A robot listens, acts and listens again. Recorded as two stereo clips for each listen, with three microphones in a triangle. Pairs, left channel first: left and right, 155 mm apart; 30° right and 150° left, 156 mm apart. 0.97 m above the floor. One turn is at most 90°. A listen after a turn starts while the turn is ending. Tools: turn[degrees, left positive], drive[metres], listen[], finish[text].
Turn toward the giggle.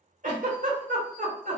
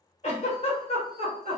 Thought: The giggle: 70° right.
Action: turn[-70]
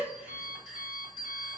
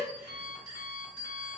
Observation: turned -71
Action: listen[]
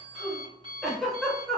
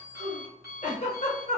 Action: finish[Found it: a giggle, straight ahead.]